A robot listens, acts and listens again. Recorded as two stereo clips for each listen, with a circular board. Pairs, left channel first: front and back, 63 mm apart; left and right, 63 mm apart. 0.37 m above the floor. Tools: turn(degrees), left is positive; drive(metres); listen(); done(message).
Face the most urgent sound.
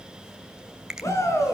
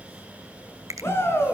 turn(degrees=40)
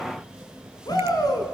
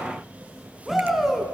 done("Found it: a shout, straight ahead.")